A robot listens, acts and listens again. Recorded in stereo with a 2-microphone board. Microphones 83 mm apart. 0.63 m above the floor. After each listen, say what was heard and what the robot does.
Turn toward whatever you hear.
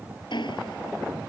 Turn 90° left.
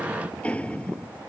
So it is at 15° left. Turn 15° left.
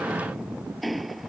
Found it: ticking, straight ahead.